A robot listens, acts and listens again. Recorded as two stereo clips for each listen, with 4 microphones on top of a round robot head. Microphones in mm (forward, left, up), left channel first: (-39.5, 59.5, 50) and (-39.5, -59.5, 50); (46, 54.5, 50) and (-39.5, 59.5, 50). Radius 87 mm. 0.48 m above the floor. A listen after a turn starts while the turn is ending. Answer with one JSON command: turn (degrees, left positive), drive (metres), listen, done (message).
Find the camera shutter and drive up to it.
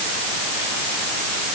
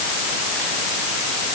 {"listen": true}
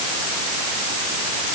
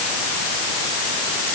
{"listen": true}
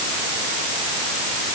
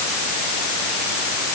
{"done": "I can't make out a camera shutter."}